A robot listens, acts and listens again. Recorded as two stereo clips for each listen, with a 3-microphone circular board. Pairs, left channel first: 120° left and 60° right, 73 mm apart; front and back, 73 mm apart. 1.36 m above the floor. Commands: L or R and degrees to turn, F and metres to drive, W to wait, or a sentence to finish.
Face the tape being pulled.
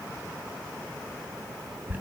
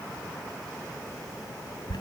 W
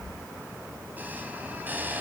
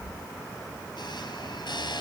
W
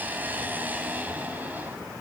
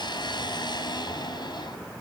I can't make out tape being pulled to turn to.